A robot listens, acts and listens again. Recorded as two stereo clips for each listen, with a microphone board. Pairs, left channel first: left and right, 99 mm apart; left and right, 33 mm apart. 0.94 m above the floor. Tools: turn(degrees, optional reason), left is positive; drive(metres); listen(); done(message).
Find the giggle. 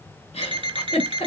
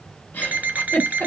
turn(degrees=90)
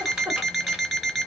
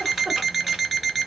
turn(degrees=-10, reason="So it is at 10° right.")
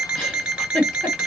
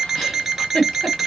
done("Facing the giggle, 1 to 2 m away.")